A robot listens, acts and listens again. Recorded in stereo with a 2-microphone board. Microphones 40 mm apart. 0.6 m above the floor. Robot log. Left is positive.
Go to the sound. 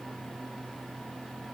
cmd idle
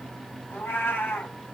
note: The cat meowing: about 60° left or 120° left.
cmd yaw +60
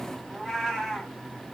cmd fwd 1.0
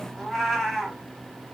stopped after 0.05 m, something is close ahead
end: Blocked. The cat meowing is further on, straight ahead.